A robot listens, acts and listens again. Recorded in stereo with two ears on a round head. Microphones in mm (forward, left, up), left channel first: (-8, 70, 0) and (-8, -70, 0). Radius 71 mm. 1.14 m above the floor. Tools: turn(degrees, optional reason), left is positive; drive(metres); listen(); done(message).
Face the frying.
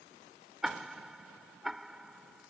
listen()
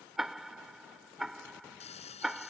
turn(degrees=45, reason="The frying: about 45° left or 135° left.")
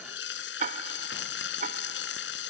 turn(degrees=90, reason="So it is at 90° left.")
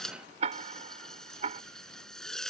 done("Facing the frying.")